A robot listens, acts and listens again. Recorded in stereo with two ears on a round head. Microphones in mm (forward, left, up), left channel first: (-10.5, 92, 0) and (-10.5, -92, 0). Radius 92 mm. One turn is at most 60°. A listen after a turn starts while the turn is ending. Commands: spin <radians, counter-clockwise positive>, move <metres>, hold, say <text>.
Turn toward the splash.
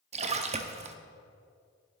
spin -0.61
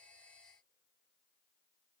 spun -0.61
hold
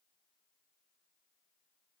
say I heard a splash, but can't make it out now. It was about straight ahead or 110° right.